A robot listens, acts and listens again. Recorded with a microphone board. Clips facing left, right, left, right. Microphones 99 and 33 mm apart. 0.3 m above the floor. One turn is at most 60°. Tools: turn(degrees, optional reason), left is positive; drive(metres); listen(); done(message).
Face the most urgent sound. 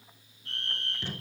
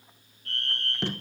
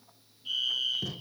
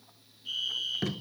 turn(degrees=15, reason="The fire alarm: about 15° left or 165° left.")
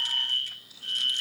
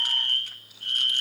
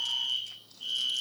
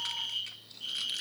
done("Found it: a fire alarm, straight ahead, over 4 m away.")